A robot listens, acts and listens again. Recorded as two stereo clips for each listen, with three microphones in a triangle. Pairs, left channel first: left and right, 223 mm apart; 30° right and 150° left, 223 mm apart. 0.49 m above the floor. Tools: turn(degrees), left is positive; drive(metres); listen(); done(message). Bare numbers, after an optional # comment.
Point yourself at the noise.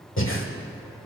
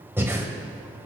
# The breathing: 70° left.
turn(70)
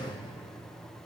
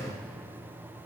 listen()
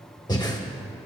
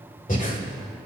# The breathing is now 20° left.
turn(20)
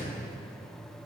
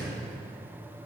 listen()
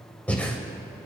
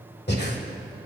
done("Found it: breathing, straight ahead, 1 to 2 m away.")